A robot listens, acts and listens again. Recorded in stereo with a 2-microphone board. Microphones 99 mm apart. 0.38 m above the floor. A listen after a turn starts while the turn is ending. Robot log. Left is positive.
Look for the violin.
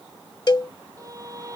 note: The violin: about 35° right or 145° right.
cmd yaw -35
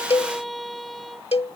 end: Facing the violin.